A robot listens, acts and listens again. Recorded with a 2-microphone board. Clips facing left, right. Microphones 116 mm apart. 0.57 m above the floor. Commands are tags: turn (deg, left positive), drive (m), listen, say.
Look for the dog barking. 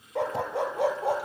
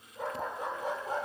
<turn deg="90"/>
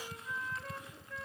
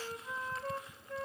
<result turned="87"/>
<listen/>
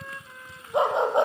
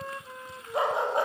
<turn deg="20"/>
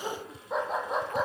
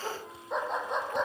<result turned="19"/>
<say>Facing the dog barking, over 4 m away.</say>